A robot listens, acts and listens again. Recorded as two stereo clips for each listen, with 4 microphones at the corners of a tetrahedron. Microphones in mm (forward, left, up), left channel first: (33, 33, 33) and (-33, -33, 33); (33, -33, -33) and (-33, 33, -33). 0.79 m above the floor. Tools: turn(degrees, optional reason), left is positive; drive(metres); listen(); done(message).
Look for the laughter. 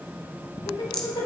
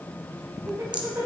turn(degrees=75, reason="The laughter: 75° left.")
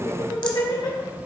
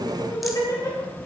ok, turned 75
done("Facing the laughter, 2 to 4 m away.")